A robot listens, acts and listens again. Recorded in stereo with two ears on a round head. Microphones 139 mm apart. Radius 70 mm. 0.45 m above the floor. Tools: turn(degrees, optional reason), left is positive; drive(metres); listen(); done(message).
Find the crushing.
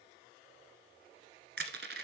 turn(degrees=-65, reason="The crushing: about 65° right or 115° right.")
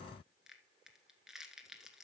done("Facing the crushing, 1 to 2 m away.")